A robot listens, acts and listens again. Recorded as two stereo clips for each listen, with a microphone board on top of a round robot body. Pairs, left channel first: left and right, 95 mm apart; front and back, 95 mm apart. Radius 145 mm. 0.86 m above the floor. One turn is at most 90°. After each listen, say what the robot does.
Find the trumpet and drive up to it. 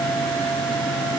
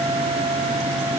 Keep listening.
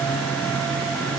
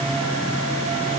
Keep listening.
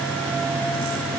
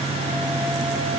I can't make out a trumpet to turn to.